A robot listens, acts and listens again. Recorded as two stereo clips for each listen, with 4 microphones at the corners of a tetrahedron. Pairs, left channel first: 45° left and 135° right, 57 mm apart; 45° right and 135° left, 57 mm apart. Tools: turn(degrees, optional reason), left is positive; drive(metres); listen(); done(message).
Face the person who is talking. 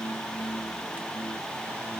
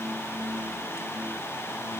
listen()
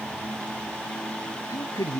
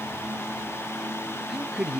turn(degrees=50, reason="The man speaking: 50° left.")
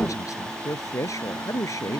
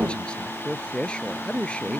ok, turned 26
turn(degrees=25, reason="The man speaking is now 25° left.")
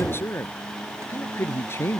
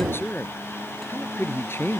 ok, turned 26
done("Facing the man speaking.")